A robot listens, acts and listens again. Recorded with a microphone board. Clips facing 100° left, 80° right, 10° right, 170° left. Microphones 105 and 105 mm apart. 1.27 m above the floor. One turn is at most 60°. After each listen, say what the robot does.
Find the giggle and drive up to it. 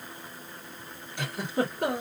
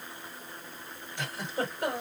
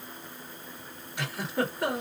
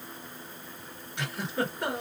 Turn 60° left.
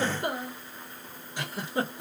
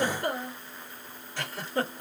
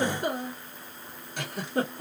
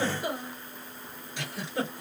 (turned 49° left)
Turn 25° left.
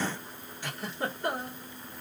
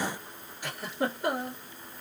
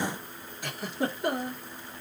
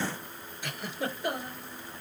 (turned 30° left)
Drive 1.0 m forward.
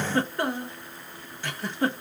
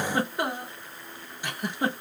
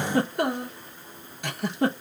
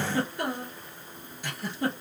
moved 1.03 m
Drive 1.0 m forward.
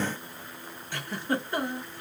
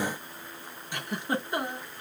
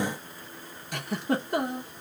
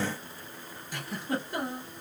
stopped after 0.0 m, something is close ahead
Arrived at the giggle, straight ahead.